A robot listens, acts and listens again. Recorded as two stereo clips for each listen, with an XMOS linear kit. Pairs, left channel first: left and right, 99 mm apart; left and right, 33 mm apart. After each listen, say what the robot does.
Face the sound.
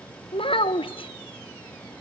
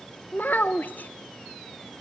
Turn 65° left.
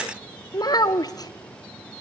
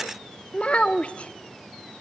Turn 40° left.
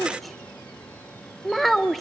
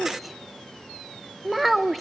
Found it: a child speaking, straight ahead, under 1 m away.